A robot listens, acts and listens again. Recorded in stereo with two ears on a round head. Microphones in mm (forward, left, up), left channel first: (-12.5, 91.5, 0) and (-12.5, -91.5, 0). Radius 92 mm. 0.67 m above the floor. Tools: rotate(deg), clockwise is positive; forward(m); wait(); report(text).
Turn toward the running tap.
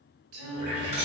rotate(35)
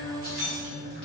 rotate(110)
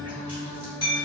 wait()
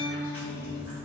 wait()
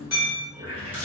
rotate(10)
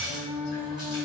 wait()
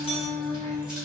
wait()
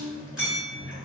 report("Found it: a running tap, straight ahead, 1 to 2 m away.")